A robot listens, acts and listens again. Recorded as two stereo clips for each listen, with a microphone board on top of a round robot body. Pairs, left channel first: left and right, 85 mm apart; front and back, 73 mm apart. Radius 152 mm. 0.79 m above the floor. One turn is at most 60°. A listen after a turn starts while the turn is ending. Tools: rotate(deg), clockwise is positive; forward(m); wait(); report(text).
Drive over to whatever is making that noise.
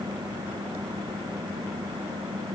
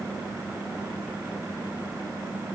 wait()
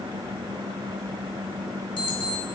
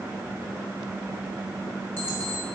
rotate(-60)
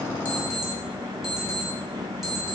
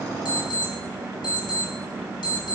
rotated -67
forward(1.0)
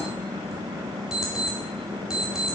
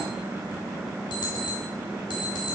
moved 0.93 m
forward(1.0)
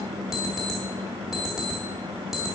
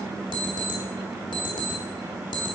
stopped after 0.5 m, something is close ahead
report("I am next to the alarm clock.")